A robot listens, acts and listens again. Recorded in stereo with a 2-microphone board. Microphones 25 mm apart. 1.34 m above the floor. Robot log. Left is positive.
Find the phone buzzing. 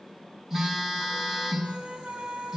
cmd yaw -30
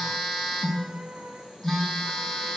note: So it is at 15° left.
cmd yaw +15
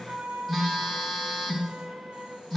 note: The phone buzzing is now 10° left.
cmd yaw +10
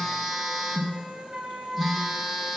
end: Facing the phone buzzing.